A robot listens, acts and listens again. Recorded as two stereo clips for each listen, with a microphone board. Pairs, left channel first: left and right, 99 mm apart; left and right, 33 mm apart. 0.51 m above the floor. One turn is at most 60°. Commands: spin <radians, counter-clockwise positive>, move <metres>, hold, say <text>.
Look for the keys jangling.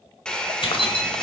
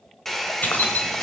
spin 1.05
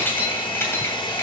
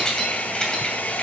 spin 0.44
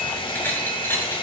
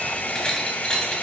spin 0.44
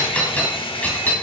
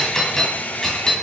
spin 0.26
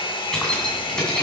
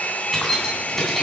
spin 0.17
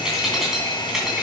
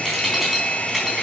say Facing the keys jangling.